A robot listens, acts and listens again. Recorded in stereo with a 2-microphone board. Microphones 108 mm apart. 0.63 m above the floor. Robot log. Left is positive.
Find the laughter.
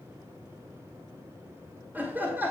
note: The laughter: about 20° right or 160° right.
cmd yaw -20
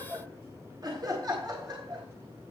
note: So it is at 140° right.
cmd yaw -140
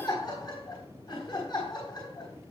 note: The laughter is now 40° left.
cmd yaw +40
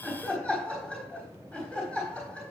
note: The laughter is now 10° left.
cmd yaw +10
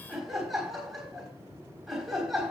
end: Facing the laughter, 2 to 4 m away.